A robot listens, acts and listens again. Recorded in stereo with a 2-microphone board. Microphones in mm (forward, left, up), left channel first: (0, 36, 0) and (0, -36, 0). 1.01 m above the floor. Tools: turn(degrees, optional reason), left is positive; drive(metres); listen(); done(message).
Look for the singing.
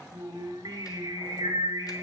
turn(degrees=-65, reason="The singing: about 65° right or 115° right.")
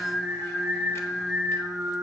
done("Found it: singing, straight ahead, 1 to 2 m away.")